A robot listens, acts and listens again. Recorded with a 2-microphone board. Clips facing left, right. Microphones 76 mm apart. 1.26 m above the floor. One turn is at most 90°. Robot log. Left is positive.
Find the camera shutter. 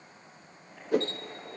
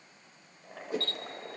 note: The camera shutter: about 20° left or 160° left.
cmd yaw +20
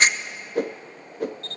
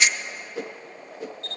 note: So it is at 140° left.
cmd yaw +90
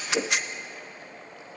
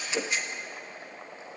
note: The camera shutter is now 80° left.
cmd yaw +80
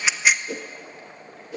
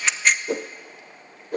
end: Found it: a camera shutter, straight ahead.